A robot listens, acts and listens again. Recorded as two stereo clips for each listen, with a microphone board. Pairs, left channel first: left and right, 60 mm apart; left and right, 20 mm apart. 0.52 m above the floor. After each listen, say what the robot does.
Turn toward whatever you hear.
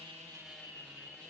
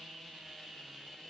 Keep listening.
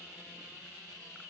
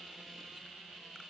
Keep listening.
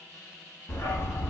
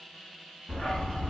Turn 45° left.
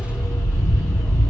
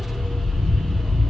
Turn 90° left.
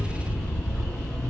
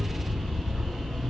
Turn 15° left.
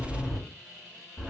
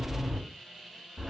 Facing the dog barking.